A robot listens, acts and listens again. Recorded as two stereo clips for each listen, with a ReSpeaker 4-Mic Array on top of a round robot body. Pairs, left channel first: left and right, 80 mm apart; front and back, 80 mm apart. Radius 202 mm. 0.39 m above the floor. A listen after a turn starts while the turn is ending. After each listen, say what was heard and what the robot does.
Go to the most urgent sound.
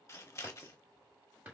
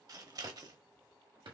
Keep listening.
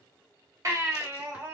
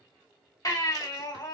The baby crying: 40° right. Turn 40° right.
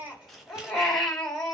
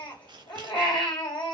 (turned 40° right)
Drive 1.0 m forward.
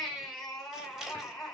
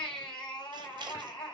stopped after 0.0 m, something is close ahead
Something is in my way. I am facing the baby crying but have not reached it.